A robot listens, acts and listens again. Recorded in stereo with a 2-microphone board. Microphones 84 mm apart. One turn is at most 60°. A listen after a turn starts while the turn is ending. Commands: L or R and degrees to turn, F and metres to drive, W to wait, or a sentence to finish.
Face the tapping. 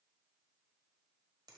W
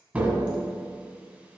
R20
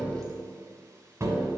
R60
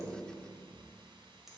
R60
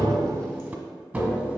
R15
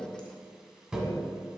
Found it: tapping, straight ahead.